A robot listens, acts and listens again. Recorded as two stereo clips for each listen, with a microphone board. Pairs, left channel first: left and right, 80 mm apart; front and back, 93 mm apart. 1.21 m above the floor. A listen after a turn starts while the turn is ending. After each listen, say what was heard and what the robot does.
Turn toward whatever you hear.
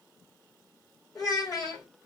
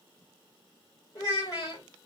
The child speaking: 50° left. Turn 50° left.
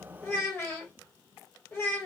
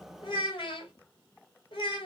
The child speaking is now 30° left. Turn 30° left.
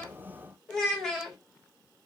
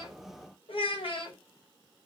Facing the child speaking, 1 to 2 m away.